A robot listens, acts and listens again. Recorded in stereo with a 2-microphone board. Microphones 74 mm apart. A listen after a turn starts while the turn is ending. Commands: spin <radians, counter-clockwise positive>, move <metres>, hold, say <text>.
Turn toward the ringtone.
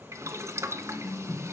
spin 0.44
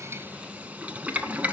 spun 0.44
hold
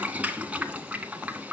hold
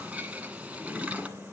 say I heard a ringtone, but can't make it out now. It was about straight ahead or 130° left.